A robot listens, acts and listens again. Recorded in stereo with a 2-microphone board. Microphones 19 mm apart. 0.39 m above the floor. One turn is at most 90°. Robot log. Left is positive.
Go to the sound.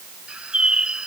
note: The bird: about 60° right or 120° right.
cmd yaw -60
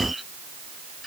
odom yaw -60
cmd fwd 1.0
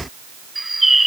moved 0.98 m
note: The bird is now 10° right.
cmd yaw -10
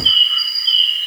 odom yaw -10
cmd fwd 1.0
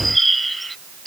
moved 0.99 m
note: The bird is now 10° left.
cmd yaw +10
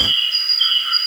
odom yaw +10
cmd fwd 1.0
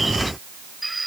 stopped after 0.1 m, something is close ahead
end: Arrived at the bird, straight ahead.